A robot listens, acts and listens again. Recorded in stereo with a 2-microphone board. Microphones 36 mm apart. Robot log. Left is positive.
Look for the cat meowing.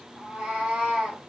note: The cat meowing: about 20° right or 160° right.
cmd yaw -20
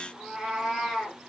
note: The cat meowing: about 15° right or 165° right.
cmd yaw -15
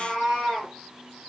note: The cat meowing: about 15° right or 165° right.
cmd yaw -15
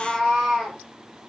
cmd yaw -30
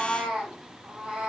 note: The cat meowing: about 30° right or 150° right.
cmd yaw -30
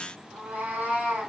note: So it is at 120° right.
cmd yaw -120
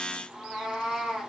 note: The cat meowing is now 10° right.
cmd yaw -10
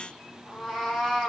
end: Found it: a cat meowing, straight ahead.